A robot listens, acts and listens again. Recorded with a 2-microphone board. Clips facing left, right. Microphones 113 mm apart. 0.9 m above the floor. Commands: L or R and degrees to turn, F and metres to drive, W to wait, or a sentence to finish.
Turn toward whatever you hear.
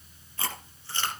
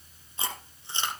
R20
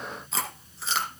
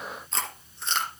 Facing the chewing, 2 to 4 m away.